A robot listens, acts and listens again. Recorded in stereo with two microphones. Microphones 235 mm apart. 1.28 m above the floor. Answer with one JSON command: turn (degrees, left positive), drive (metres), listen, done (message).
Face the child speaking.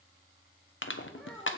{"turn": 30}
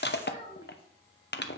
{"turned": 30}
{"turn": 155}
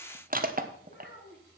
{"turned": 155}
{"turn": 50}
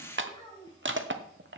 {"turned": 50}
{"turn": 20}
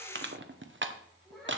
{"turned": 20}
{"done": "Found it: a child speaking, straight ahead."}